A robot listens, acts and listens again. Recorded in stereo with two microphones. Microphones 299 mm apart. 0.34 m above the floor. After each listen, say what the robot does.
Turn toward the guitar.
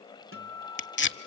Turn 45° right.
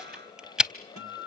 Turn 85° right.
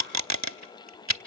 Keep listening.
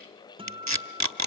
Turn 20° right.
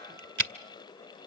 Keep listening.
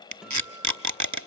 Found it: a guitar, straight ahead, 1 to 2 m away.